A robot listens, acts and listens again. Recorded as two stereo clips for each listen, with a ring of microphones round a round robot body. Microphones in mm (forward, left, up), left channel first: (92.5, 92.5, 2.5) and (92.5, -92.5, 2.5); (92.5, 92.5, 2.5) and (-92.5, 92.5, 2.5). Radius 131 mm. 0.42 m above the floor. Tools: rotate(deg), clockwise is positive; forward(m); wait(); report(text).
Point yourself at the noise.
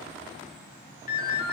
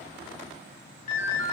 rotate(-45)
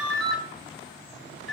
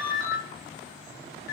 report("Facing the ringtone.")